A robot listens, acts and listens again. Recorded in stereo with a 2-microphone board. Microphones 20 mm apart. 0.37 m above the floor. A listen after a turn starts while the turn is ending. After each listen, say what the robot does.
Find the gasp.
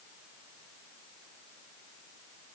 Keep listening.
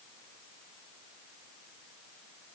Keep listening.
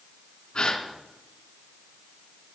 Turn 45° left.
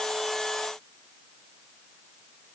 Keep listening.
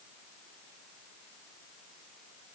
I heard a gasp, but can't make it out now. It was about straight ahead or 90° left.